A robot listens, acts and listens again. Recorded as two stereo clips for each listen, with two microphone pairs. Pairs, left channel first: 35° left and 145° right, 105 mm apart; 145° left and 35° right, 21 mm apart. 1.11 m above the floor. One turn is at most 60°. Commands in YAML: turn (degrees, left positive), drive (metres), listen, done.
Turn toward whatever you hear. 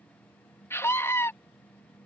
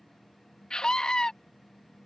turn: 60
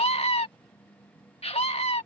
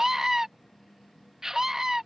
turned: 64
turn: 35
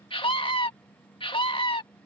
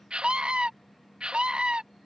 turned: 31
done: "Facing the scream."